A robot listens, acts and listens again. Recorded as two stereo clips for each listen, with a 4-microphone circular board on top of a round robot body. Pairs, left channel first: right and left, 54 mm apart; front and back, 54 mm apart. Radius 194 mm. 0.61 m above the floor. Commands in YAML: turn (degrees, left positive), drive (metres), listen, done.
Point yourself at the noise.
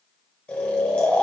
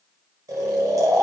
turn: -155
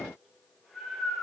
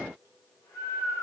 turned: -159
done: "Facing the snoring, under 1 m away."